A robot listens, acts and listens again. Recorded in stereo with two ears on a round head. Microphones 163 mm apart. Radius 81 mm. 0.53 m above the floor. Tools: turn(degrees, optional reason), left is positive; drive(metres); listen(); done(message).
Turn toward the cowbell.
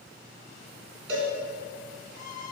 turn(degrees=-90)
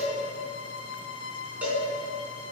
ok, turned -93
turn(degrees=-10, reason="So it is at 10° right.")
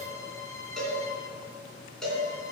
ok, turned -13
done("Found it: a cowbell, straight ahead, 2 to 4 m away.")